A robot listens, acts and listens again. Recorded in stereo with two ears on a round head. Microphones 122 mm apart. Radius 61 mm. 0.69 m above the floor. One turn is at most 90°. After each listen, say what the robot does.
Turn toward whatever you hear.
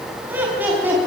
Turn 30° right.
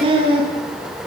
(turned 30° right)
Turn 90° right.
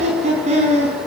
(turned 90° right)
Turn 50° right.
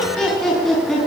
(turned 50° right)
Facing the laughter.